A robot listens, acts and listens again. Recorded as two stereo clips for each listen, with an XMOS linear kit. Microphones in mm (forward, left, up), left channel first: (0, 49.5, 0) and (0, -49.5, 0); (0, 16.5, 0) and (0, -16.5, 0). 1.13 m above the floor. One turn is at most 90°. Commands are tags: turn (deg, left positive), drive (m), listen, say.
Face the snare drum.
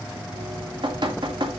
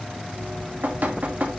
<listen/>
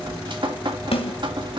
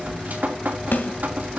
<turn deg="75"/>
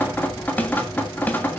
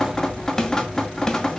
<turn deg="15"/>
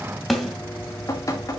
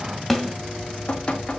<say>Facing the snare drum, 2 to 4 m away.</say>